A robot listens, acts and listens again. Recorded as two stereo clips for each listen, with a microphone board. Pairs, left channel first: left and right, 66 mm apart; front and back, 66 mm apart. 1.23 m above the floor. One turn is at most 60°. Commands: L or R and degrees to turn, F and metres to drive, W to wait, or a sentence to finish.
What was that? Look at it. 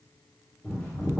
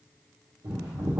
L60
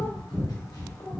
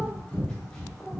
L60
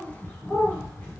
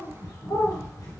L25
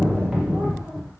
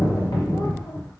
R10
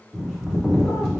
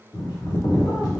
Facing the bird, 1 to 2 m away.